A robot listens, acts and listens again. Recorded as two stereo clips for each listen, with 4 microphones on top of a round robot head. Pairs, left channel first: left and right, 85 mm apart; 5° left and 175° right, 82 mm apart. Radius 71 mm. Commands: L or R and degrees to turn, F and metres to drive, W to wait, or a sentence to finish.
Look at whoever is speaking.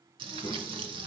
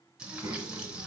L145
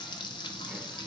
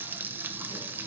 W
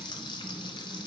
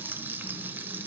Facing the child speaking.